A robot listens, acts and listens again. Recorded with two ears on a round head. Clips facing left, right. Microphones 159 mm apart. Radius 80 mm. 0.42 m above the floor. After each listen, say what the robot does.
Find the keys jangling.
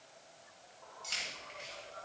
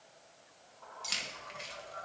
Turn 60° right.
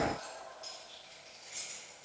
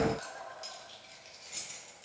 Turn 70° right.
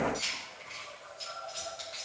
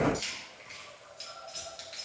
Turn 30° right.
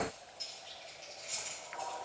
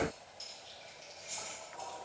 Turn 15° right.
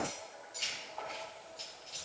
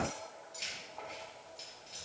Found it: keys jangling, straight ahead.